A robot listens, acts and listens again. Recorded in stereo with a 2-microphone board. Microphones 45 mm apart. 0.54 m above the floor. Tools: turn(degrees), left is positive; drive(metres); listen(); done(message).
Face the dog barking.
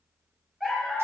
turn(degrees=-30)
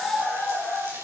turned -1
turn(degrees=-30)
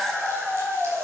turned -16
turn(degrees=-155)
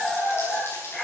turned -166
turn(degrees=10)
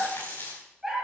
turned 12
done("Found it: a dog barking, straight ahead.")